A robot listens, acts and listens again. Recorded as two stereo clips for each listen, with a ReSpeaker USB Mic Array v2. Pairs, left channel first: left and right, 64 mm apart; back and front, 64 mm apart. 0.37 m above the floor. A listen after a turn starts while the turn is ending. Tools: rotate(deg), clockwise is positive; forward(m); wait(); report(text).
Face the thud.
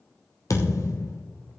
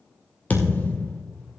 rotate(-120)
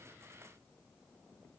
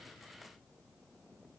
report("I heard a thud from this way, but can't make it out now.")